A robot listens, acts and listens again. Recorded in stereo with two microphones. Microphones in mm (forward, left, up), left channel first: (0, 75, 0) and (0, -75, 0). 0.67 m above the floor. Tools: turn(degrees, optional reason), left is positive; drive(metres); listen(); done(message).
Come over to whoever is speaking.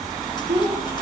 turn(degrees=-45, reason="The child speaking: about 45° right or 135° right.")
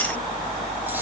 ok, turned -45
listen()
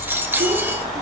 listen()
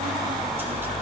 done("I heard a child speaking, but can't make it out now. It was about straight ahead or 90° right. I did not reach it.")